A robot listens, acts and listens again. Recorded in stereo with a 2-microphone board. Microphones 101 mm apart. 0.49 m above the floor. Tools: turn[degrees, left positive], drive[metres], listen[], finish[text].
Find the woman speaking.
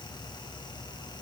Action: listen[]
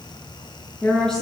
Action: turn[30]
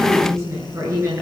Thought: So it is at 30° right.
Action: turn[-30]
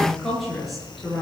Action: finish[Found it: a woman speaking, straight ahead, over 4 m away.]